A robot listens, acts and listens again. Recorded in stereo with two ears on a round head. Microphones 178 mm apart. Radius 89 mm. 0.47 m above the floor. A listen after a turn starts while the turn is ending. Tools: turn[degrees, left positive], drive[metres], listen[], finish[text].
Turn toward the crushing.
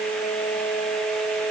Action: listen[]
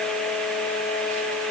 Action: listen[]
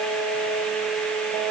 Action: finish[I can't make out crushing to turn to.]